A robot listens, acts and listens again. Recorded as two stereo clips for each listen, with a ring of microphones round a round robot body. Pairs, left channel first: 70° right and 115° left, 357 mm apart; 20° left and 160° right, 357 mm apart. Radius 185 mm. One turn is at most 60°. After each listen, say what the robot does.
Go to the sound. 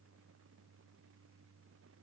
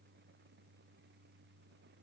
Keep listening.
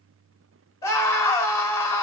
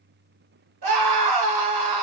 Turn 60° right.
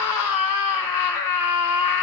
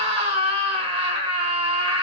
Turn 60° right.
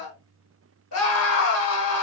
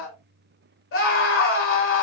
Turn 25° right.
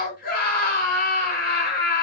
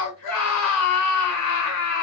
Drive 1.0 m forward.
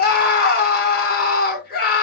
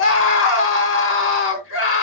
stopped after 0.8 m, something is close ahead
Turn 15° right.
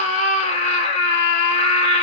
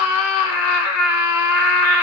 I am next to the scream.